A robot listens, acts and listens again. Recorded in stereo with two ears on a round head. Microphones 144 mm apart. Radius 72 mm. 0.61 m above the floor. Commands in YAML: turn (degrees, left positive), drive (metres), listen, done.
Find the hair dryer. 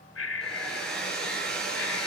turn: 30
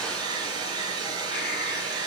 turn: -25
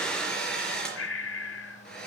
done: "Found it: a hair dryer, straight ahead."